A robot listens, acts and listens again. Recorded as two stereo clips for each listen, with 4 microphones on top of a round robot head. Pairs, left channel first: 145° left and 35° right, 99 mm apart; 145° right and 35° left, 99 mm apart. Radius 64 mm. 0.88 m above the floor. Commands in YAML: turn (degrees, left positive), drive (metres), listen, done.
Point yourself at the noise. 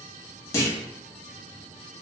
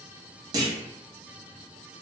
turn: 85
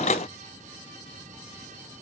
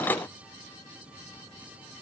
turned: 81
done: "I heard a clunk from this way, but can't make it out now."